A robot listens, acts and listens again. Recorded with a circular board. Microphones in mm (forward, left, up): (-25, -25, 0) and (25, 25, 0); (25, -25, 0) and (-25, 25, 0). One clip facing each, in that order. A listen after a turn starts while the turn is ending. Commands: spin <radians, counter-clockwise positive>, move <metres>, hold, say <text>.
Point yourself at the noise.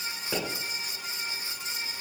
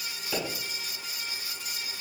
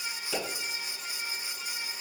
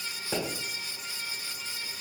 spin 2.88
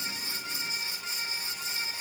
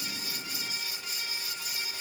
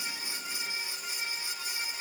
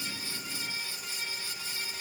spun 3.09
spin -0.26
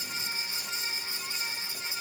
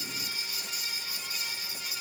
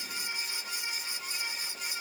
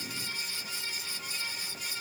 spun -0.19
say I heard a pop from this way, but can't make it out now.